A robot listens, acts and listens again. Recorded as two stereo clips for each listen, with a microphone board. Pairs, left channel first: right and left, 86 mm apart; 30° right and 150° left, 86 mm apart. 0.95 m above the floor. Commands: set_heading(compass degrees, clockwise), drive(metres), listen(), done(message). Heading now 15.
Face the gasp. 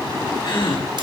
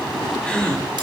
set_heading(125)
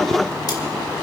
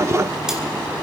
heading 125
done("Facing where the gasp came from. I can't hear it now.")